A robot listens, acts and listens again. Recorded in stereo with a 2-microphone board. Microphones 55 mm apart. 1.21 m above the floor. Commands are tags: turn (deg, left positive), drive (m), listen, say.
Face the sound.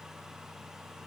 <listen/>
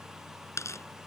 <turn deg="65"/>
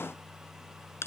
<turn deg="50"/>
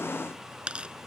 <turn deg="-20"/>
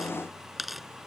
<say>Found it: tearing paper, straight ahead.</say>